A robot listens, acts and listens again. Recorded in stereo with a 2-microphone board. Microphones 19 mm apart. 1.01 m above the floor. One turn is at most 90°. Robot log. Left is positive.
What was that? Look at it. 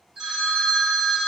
note: The phone ringing: about 45° right or 135° right.
cmd yaw -45
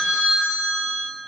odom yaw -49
note: So it is at 85° right.
cmd yaw -85
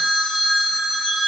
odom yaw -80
end: Found it: a phone ringing, straight ahead, 1 to 2 m away.